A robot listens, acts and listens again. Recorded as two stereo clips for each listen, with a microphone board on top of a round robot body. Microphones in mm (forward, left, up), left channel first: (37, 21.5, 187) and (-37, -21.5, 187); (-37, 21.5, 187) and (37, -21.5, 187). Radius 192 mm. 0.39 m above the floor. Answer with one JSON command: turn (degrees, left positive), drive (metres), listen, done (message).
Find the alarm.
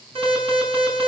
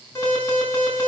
{"turn": -150}
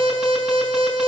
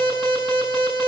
{"turn": -65}
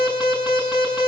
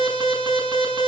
{"done": "Found it: an alarm, straight ahead, over 4 m away."}